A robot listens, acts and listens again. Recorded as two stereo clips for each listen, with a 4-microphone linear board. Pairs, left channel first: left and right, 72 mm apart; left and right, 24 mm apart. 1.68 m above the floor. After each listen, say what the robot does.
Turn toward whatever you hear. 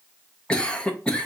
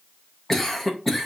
Turn 15° left.
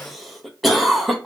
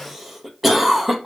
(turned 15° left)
Found it: a cough, straight ahead, under 1 m away.